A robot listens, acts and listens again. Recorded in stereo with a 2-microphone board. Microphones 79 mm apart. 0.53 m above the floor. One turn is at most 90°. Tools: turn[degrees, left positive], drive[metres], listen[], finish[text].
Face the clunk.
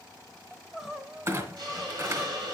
Thought: The clunk: about 40° right or 140° right.
Action: turn[-40]
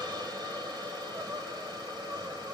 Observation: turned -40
Action: listen[]
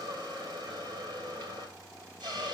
Action: finish[I heard a clunk, but can't make it out now. It was about straight ahead or 100° right.]